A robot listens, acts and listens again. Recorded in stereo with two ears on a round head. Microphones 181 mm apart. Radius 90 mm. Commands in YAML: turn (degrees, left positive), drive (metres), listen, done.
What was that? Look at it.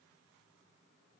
listen: true
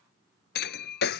turn: 55
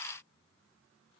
listen: true
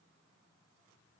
done: "I heard breaking glass, but can't make it out now. It was about straight ahead or 70° left."